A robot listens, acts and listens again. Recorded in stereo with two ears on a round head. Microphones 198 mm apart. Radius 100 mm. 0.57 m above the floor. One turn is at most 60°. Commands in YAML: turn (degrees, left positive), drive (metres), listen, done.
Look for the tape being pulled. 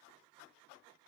listen: true
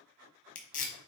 turn: 35
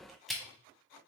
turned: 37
done: "Facing the tape being pulled."